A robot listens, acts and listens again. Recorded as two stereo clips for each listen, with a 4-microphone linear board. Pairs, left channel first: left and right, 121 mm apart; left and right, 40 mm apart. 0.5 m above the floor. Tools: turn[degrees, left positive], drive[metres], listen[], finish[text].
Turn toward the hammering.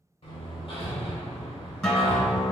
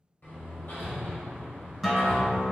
Thought: The hammering: about 50° left or 130° left.
Action: turn[50]
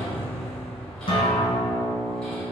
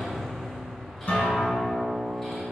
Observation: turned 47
Action: finish[Facing the hammering.]